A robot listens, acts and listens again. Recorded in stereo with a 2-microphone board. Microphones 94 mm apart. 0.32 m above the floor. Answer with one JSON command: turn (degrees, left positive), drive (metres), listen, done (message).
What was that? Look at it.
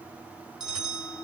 {"turn": -30}
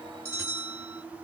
{"turn": -150}
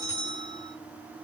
{"turn": -40}
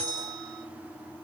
{"turn": 10}
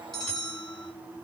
{"done": "Facing the bell, 2 to 4 m away."}